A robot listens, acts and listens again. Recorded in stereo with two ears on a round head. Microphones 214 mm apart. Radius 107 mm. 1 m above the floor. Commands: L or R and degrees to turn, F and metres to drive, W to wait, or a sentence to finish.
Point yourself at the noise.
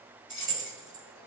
L30
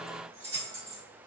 R20
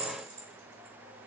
Found it: keys jangling, straight ahead, 1 to 2 m away.